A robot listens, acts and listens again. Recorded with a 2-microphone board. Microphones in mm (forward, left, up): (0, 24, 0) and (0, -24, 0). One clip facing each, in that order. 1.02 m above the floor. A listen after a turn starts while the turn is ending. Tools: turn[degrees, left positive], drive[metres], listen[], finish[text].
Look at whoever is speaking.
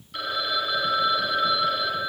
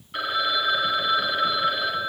Action: listen[]
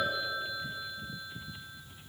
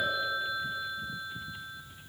Action: listen[]
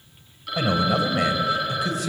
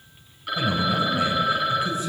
Action: turn[90]
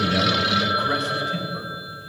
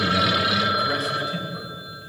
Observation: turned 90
Action: listen[]
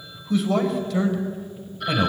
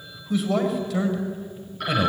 Action: finish[Facing the man speaking.]